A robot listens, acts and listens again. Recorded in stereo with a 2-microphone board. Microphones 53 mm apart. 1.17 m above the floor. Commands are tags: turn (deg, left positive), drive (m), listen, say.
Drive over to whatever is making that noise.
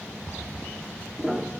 <turn deg="-30"/>
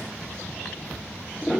<turn deg="20"/>
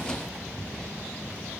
<listen/>
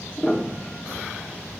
<drive m="1.0"/>
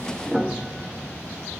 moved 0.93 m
<drive m="1.0"/>
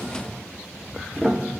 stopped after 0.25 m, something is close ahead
<say>I am next to the piano.</say>